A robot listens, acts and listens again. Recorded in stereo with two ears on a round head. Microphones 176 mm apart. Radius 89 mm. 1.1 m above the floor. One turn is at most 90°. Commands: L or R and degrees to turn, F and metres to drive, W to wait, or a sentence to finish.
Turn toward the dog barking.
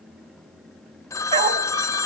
R30
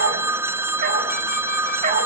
R40
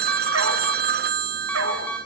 R90
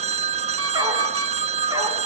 R20
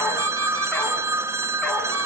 W
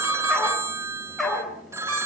Facing the dog barking.